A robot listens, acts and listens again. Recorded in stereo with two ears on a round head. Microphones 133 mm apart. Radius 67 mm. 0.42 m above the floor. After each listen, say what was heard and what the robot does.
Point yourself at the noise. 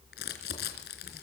Turn 90° left.
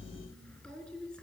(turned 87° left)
Found it: crumpling, straight ahead, 2 to 4 m away.